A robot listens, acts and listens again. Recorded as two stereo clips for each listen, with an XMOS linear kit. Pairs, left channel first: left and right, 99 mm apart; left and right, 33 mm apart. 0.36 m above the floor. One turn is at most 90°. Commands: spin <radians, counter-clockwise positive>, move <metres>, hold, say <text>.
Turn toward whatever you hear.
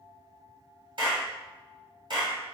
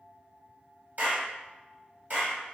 spin -0.96
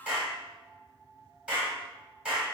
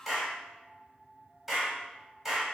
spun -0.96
spin -0.26
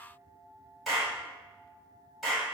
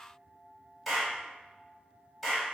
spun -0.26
say Facing the clap.